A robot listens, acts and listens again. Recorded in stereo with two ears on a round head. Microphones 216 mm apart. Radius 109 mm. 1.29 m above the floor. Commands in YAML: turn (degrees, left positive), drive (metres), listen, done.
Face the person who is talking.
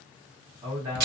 turn: -20
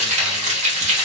listen: true
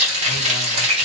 listen: true
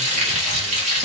done: "I heard a man speaking, but can't make it out now. It was about straight ahead or 140° right."